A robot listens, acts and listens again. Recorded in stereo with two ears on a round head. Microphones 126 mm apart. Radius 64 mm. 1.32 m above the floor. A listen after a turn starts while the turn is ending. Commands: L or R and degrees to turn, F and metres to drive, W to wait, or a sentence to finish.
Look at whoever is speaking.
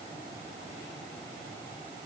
W
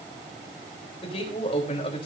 L45
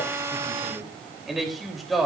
Found it: a man speaking, straight ahead.